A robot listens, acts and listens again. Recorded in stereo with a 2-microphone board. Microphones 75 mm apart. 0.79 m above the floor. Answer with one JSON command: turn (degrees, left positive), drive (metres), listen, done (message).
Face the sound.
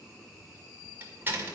{"turn": -25}
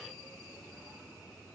{"listen": true}
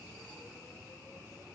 {"done": "I heard a door slam, but can't make it out now. It was about straight ahead or 130° right."}